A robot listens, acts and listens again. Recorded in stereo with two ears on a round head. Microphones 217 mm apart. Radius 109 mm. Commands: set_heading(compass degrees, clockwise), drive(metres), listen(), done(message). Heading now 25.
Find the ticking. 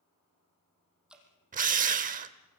listen()
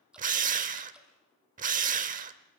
listen()
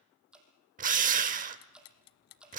set_heading(325)
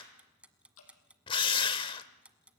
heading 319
done("Found it: ticking, straight ahead.")